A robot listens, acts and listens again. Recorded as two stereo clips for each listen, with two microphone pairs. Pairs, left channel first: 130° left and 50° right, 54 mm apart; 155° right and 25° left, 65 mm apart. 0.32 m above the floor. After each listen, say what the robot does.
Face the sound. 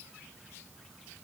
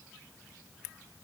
Keep listening.
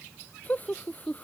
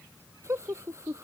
Turn 70° left.
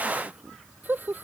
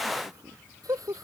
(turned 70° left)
Found it: laughter, straight ahead.